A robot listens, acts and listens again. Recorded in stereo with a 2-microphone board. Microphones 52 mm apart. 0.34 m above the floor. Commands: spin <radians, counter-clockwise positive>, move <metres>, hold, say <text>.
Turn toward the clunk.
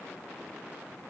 hold
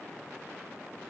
hold
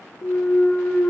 spin 0.79
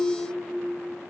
hold
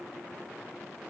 say I heard a clunk, but can't make it out now. It was about straight ahead or 90° left.